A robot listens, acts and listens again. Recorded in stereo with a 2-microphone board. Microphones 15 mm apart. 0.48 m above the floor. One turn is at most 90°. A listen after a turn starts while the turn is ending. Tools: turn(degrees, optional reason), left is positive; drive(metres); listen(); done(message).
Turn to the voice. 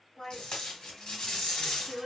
turn(degrees=40, reason="The woman speaking: about 40° left or 140° left.")
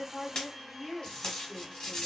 turn(degrees=90, reason="So it is at 95° left.")
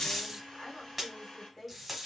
turn(degrees=35, reason="The woman speaking is now 35° left.")
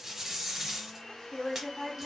turn(degrees=15, reason="The woman speaking is now 15° left.")
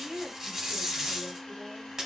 done("Facing the woman speaking.")